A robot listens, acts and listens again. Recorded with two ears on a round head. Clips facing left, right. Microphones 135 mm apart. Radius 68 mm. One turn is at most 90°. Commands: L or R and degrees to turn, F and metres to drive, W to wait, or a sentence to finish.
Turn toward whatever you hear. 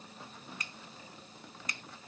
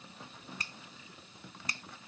R30
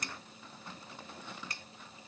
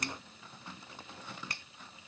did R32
R90
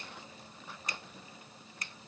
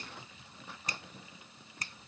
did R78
R35
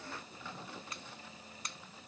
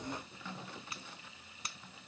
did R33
Found it: a finger snap, straight ahead.